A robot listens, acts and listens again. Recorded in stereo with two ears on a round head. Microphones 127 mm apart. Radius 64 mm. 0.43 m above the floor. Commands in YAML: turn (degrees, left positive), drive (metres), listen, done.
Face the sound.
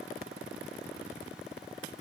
listen: true
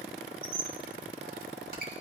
turn: -65
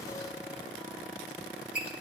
turn: -10
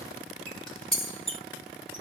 done: "Facing the squeak."